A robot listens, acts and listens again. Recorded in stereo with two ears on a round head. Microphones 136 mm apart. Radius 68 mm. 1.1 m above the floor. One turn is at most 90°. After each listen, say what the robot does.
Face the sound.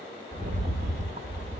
Turn 55° right.
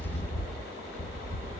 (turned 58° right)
Turn 55° right.
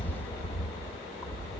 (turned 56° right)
Found it: a rattle, straight ahead.